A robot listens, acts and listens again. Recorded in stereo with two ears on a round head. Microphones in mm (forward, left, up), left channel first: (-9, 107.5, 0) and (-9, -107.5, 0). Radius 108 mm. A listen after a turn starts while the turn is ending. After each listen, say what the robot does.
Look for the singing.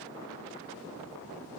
Keep listening.
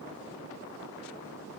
Keep listening.
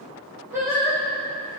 Turn 30° right.
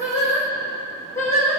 Turn 10° left.
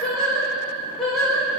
Facing the singing, over 4 m away.